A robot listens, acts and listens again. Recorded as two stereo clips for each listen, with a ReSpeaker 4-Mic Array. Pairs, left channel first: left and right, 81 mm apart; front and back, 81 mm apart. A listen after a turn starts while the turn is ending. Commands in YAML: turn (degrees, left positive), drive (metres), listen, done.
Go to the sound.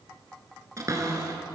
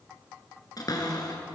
turn: -40
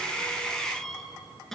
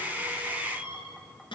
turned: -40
drive: 1.0
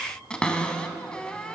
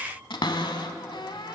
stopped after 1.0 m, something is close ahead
turn: 10
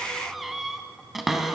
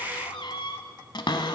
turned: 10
done: "Arrived at the cupboard door, straight ahead."